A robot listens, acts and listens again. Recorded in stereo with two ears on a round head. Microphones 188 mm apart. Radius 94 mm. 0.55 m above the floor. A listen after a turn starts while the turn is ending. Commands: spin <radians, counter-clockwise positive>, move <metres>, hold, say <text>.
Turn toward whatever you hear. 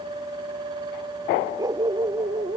spin -0.35
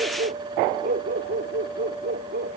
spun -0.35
spin -2.27
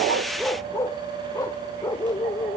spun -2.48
spin 0.26
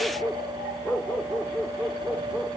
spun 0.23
say Facing the dog barking.